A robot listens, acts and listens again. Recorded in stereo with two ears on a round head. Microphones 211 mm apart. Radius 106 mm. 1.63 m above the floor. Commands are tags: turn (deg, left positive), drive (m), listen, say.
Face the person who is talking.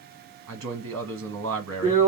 <turn deg="-55"/>
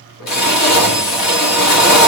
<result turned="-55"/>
<listen/>
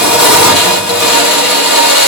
<listen/>
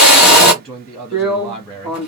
<say>Facing the man speaking.</say>